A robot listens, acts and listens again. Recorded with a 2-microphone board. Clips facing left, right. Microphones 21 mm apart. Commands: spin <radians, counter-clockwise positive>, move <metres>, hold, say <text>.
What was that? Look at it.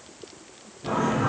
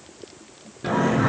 spin -1.13
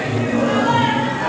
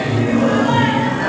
spin -0.17
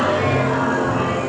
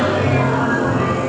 say Facing the singing.